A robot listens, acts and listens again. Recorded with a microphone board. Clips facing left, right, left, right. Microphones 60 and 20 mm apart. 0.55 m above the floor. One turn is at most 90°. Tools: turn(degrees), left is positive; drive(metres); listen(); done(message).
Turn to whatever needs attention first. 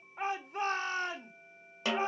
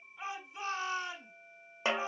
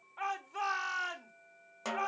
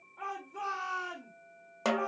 turn(degrees=50)
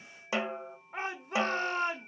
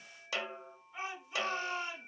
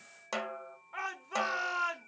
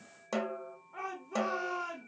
turn(degrees=65)
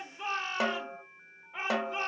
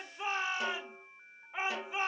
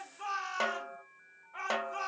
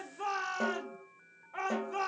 turn(degrees=-15)
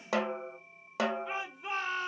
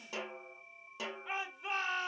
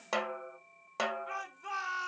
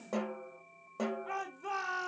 done("Found it: a shout, straight ahead.")